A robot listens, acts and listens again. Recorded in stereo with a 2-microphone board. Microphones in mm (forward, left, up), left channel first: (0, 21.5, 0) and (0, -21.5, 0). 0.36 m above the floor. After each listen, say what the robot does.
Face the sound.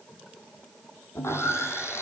Turn 90° left.
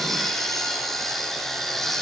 Found it: sawing, straight ahead, over 4 m away.